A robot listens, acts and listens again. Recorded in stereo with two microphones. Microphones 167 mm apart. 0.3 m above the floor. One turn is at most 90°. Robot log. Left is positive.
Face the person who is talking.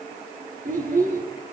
note: The child speaking: about 55° right or 125° right.
cmd yaw -55
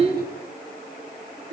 note: So it is at 70° right.
cmd yaw -70
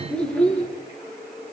end: Found it: a child speaking, straight ahead, over 4 m away.